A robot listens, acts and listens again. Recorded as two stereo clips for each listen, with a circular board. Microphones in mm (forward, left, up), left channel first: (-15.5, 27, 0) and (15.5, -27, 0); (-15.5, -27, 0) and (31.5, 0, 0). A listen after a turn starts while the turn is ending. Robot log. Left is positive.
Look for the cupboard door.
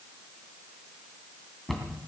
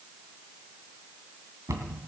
note: The cupboard door: 30° left.
cmd yaw +30
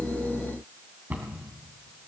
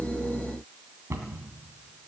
end: Found it: a cupboard door, straight ahead, 2 to 4 m away.